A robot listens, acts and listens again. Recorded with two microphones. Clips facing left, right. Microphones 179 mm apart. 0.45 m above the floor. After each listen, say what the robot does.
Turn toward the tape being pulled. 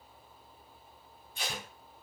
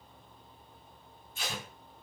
Turn 55° left.
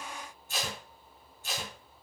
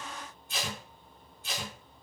Turn 55° left.
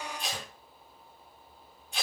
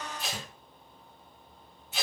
Found it: tape being pulled, straight ahead.